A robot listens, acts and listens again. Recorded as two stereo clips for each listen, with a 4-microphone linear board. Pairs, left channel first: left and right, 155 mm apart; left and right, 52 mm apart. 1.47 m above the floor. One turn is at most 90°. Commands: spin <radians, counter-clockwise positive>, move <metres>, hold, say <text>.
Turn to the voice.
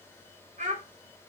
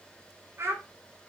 spin -0.96
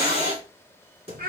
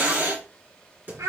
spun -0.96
hold
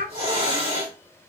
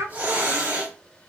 spin -1.31
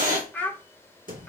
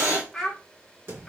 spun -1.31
spin 0.17
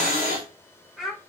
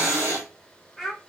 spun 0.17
say Found it: a child speaking, straight ahead, 1 to 2 m away.